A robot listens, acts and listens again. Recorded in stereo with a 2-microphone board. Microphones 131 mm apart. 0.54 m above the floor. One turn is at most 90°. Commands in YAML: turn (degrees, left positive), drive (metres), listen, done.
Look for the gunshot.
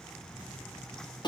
listen: true
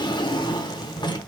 listen: true
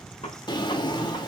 turn: 55
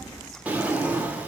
listen: true
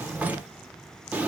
done: "I heard a gunshot, but can't make it out now. It was about straight ahead or 70° left."